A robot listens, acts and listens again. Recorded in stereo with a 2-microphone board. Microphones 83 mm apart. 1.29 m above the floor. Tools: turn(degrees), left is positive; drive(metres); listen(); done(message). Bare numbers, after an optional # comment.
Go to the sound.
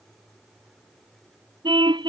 # The car horn: about 70° right or 110° right.
turn(-70)
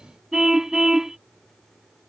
drive(1.0)
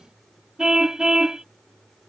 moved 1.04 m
drive(1.0)
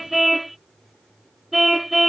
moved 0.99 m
drive(1.0)
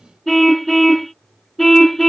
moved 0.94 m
drive(1.0)
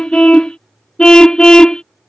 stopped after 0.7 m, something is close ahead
# The car horn is now 15° left.
turn(15)
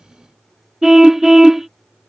done("I am next to the car horn.")